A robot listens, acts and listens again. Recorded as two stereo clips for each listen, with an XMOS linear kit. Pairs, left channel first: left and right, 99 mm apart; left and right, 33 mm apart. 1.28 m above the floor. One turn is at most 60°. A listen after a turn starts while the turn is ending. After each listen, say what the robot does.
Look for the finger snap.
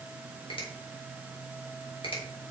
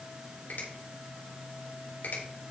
Turn 60° left.
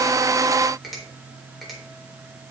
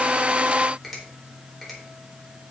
Found it: a finger snap, straight ahead.